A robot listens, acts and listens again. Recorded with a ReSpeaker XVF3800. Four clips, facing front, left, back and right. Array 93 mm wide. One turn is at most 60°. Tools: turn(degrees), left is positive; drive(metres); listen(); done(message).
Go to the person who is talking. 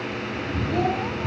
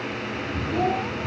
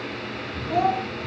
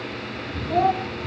turn(degrees=-60)
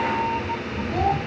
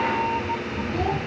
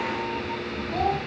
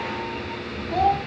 turn(degrees=-60)
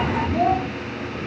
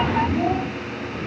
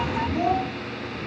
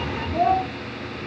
turn(degrees=-45)
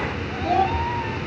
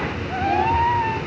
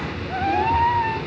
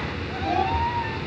listen()
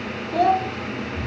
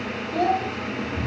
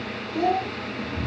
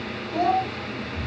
drive(metres=1.0)
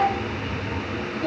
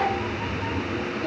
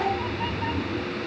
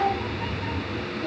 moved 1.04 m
drive(metres=1.0)
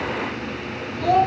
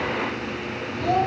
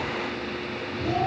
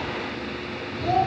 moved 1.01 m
drive(metres=1.0)
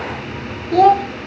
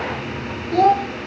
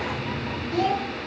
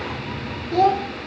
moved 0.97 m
drive(metres=1.0)
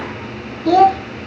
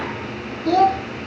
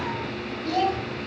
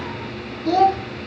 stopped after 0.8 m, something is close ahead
done("Arrived at the child speaking, straight ahead.")